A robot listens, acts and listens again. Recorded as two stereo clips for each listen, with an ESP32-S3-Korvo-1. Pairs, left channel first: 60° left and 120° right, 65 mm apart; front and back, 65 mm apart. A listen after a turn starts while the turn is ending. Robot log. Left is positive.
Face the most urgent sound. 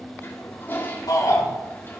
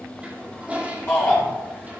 note: The shout: 60° left.
cmd yaw +60
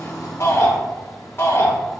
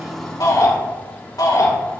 end: Found it: a shout, straight ahead, 2 to 4 m away.